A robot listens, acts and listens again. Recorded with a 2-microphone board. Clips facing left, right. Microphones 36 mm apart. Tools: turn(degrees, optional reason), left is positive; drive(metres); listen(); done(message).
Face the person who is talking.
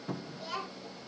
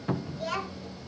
turn(degrees=-75, reason="The child speaking: about 75° right or 105° right.")
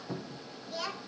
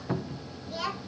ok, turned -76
done("Found it: a child speaking, straight ahead.")